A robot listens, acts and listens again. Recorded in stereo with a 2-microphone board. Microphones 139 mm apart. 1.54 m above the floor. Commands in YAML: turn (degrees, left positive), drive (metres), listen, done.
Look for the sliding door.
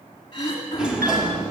turn: -30
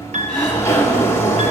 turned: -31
turn: 20
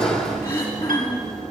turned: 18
done: "Found it: a sliding door, straight ahead, 1 to 2 m away."